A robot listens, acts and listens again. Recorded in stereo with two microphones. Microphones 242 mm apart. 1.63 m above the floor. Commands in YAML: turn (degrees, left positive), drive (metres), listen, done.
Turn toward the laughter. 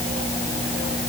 listen: true
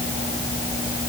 listen: true
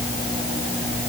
done: "I can't make out laughter."